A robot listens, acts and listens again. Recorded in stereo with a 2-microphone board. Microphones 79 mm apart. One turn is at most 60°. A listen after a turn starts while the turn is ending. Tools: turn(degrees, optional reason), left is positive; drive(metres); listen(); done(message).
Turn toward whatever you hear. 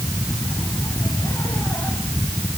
listen()
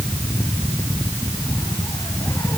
listen()
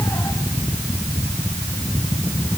done("I can't make out anything to turn to.")